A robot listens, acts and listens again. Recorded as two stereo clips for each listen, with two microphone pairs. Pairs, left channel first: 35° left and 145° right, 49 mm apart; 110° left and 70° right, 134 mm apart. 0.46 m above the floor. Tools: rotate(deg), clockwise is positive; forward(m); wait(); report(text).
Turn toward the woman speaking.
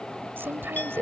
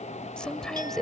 rotate(165)
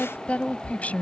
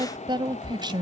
rotate(20)
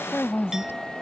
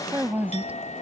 report("Found it: a woman speaking, straight ahead.")